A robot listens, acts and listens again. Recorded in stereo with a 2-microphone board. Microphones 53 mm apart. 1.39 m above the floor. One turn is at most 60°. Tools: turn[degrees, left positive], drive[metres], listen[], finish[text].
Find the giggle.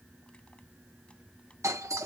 Action: listen[]
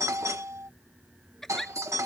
Action: turn[30]
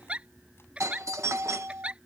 Thought: So it is at 25° right.
Action: turn[-25]
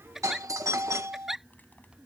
Action: finish[Found it: a giggle, straight ahead.]